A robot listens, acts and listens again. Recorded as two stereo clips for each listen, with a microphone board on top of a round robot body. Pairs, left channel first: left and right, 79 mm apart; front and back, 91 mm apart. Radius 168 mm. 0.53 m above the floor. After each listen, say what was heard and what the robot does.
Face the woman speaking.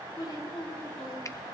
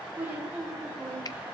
The woman speaking: 105° left. Turn 105° left.
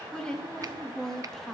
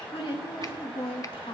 Found it: a woman speaking, straight ahead.